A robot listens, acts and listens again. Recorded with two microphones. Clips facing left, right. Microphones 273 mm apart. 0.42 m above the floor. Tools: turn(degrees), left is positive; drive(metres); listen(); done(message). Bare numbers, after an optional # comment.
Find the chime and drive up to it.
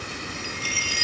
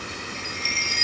# The chime: about 35° left or 145° left.
turn(35)
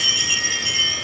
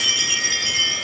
drive(1.0)
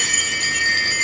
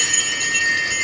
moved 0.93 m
drive(1.0)
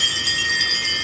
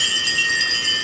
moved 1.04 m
# The chime is now 10° right.
turn(-10)
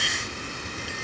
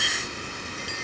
listen()
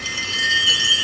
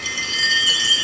drive(1.0)
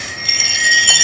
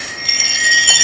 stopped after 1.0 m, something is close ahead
done("Arrived at the chime, straight ahead.")